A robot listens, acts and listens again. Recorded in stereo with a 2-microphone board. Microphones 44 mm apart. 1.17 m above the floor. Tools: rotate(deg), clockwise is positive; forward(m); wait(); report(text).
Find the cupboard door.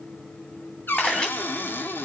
rotate(-55)
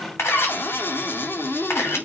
rotate(-70)
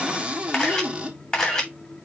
rotate(25)
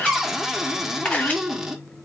report("Facing the cupboard door, 1 to 2 m away.")